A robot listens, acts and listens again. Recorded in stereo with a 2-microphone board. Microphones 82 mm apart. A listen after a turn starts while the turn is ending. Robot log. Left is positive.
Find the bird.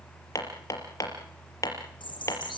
cmd yaw +90
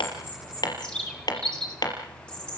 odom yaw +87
note: So it is at 10° left.
cmd yaw +10
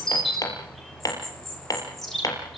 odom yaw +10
end: Found it: a bird, straight ahead.